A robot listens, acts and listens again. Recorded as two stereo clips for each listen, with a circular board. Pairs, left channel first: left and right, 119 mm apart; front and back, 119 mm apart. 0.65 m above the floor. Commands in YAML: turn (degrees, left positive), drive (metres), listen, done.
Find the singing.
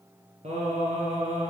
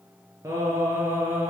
turn: -110
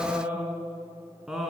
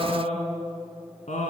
done: "Facing the singing, 2 to 4 m away."